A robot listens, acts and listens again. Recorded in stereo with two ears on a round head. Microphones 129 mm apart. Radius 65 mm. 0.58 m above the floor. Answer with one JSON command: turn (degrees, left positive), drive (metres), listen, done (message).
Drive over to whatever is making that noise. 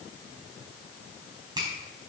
{"turn": -30}
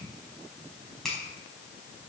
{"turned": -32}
{"drive": 1.0}
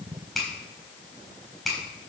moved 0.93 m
{"drive": 1.0}
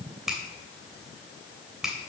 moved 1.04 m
{"drive": 1.0}
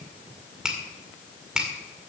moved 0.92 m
{"drive": 1.0}
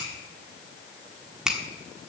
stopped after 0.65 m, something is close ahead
{"done": "I am next to the finger snap."}